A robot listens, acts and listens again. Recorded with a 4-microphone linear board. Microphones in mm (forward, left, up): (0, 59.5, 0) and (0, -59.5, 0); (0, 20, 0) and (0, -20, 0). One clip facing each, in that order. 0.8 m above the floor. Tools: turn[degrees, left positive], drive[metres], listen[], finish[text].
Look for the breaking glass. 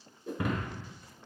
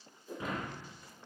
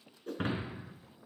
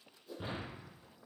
Thought: The breaking glass: about 70° left or 110° left.
Action: turn[70]
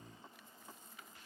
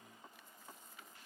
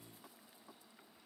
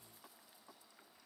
Action: listen[]
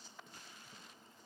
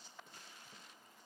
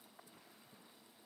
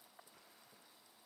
Action: finish[I heard breaking glass, but can't make it out now. It was about straight ahead or 40° left.]